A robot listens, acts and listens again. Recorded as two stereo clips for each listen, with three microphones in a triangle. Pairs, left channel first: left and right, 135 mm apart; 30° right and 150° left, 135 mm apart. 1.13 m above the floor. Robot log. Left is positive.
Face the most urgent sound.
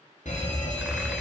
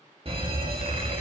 note: The fire alarm: 105° left.
cmd yaw +105
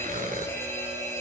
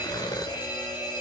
note: The fire alarm is now 20° left.
cmd yaw +20
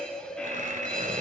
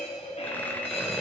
end: Found it: a fire alarm, straight ahead.